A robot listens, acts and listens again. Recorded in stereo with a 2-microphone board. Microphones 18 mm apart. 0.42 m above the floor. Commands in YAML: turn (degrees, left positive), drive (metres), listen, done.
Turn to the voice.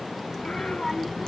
turn: 30
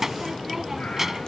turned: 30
turn: -20
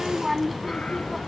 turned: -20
done: "Found it: a child speaking, straight ahead."